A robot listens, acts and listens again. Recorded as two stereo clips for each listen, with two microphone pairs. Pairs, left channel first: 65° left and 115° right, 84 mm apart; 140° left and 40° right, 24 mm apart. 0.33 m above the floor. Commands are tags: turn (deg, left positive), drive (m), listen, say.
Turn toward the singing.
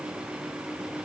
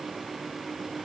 <listen/>
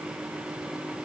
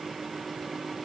<listen/>
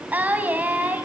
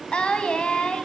<turn deg="175"/>
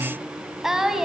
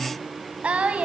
<turn deg="-35"/>
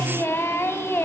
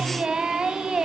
<say>Facing the singing.</say>